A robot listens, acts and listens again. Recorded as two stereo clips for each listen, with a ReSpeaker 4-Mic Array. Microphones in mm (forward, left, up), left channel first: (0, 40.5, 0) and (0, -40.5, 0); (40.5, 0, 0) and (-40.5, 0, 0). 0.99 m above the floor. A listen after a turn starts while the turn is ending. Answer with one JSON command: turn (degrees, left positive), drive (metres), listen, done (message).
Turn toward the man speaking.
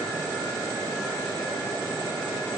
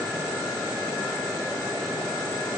{"listen": true}
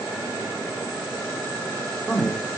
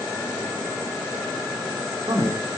{"turn": 175}
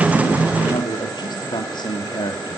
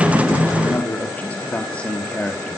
{"turn": 80}
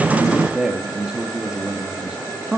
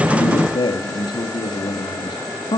{"turn": -10}
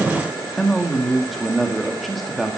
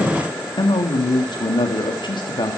{"done": "Found it: a man speaking, straight ahead."}